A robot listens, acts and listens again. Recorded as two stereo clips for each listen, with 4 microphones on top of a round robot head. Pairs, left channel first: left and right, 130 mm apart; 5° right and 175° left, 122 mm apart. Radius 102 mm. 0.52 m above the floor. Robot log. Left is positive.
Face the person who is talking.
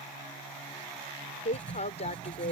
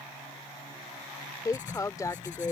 note: The woman speaking: 55° left.
cmd yaw +55
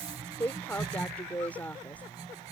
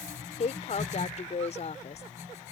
note: The woman speaking is now 10° left.
cmd yaw +10
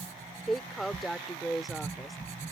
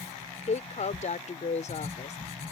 end: Facing the woman speaking.